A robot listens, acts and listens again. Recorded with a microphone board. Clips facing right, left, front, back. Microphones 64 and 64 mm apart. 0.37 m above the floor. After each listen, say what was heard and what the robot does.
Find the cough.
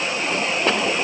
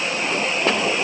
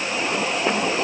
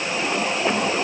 Keep listening.
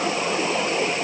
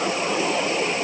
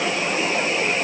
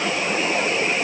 Keep listening.
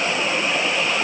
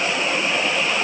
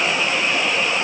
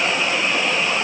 I can't make out a cough.